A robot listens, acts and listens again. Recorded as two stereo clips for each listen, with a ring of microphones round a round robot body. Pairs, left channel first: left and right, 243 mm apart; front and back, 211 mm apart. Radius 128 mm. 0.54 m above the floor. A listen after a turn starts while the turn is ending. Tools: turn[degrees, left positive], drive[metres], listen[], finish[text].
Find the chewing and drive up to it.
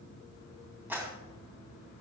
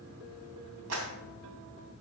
Action: listen[]
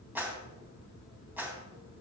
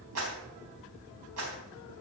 Action: listen[]
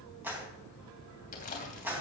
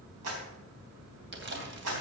Thought: The chewing: 150° left.
Action: turn[150]
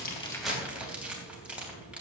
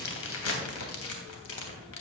Action: drive[1.0]
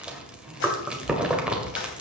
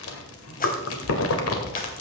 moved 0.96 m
Action: drive[1.0]
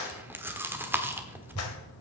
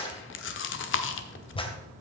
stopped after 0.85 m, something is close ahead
Thought: The chewing is now 10° right.
Action: turn[-10]
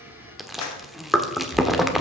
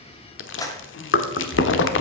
Action: finish[Arrived at the chewing, straight ahead.]